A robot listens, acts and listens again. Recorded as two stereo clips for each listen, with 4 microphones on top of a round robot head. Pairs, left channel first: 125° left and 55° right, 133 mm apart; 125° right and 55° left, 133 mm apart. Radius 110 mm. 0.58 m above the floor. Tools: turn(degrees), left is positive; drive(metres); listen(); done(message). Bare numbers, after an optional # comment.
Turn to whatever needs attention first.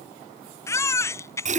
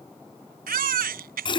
# The baby crying: 55° left.
turn(55)
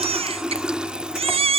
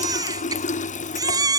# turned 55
# The baby crying is now 10° right.
turn(-10)
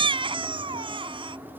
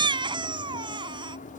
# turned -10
done("Facing the baby crying.")